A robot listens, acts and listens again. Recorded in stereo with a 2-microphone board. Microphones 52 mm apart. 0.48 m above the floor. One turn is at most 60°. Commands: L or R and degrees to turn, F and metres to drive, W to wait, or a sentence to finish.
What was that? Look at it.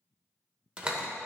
R20
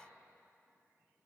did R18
W
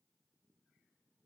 I heard a door slam, but can't make it out now. It was about straight ahead or 145° right.